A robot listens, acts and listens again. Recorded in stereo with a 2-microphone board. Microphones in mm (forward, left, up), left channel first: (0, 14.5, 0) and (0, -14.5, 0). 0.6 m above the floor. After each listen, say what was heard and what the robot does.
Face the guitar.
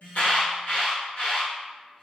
Keep listening.
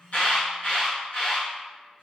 Keep listening.
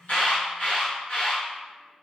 I can't make out a guitar, only an alarm.